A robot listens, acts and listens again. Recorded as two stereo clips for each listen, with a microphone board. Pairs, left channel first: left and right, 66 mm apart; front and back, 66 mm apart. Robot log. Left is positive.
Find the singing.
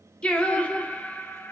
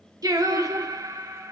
note: The singing: 150° left.
cmd yaw +150
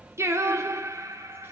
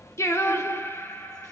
note: The singing is now 55° right.
cmd yaw -55
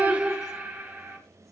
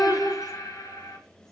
note: The singing is now 25° right.
cmd yaw -25
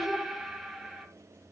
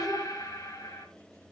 end: Facing the singing.